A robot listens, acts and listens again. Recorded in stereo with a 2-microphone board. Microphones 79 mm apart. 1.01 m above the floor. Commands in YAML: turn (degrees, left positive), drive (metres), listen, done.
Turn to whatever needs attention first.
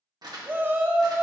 turn: -25
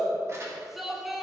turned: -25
done: "Found it: a shout, straight ahead, 1 to 2 m away."